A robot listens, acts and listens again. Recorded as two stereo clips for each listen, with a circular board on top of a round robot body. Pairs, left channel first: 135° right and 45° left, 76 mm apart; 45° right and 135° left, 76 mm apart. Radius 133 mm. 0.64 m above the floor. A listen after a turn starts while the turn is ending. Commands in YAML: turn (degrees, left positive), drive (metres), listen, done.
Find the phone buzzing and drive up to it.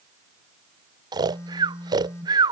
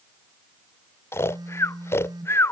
turn: 170
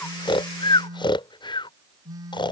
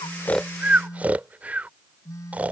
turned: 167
drive: 1.0
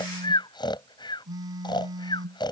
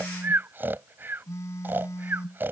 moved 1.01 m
turn: 10
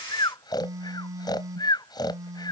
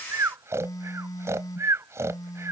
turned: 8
drive: 1.0
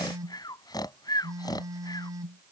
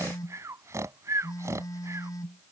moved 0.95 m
drive: 1.0
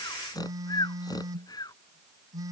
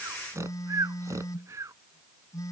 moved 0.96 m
drive: 1.0
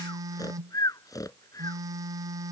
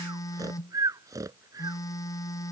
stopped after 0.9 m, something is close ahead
done: "Arrived at the phone buzzing, straight ahead."